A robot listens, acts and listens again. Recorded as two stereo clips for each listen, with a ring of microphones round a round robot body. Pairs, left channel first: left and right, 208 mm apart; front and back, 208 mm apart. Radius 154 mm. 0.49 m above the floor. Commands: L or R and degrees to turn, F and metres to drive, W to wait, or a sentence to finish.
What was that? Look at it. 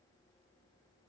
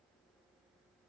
W
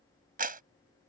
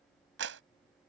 R135
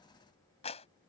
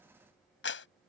L20
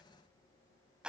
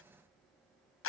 Facing the clap.